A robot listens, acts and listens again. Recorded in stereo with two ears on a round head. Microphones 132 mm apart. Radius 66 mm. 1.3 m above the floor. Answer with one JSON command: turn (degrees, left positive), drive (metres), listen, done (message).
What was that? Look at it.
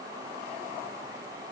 {"listen": true}
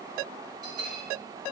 {"turn": -25}
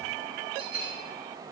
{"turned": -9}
{"turn": -35}
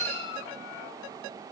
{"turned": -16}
{"turn": -130}
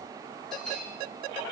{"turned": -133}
{"done": "Found it: a bell, straight ahead, over 4 m away."}